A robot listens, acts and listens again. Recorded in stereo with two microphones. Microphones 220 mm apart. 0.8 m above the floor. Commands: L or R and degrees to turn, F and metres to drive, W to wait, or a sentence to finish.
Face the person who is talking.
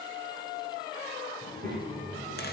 R35
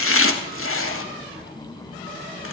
Found it: a child speaking, straight ahead, over 4 m away.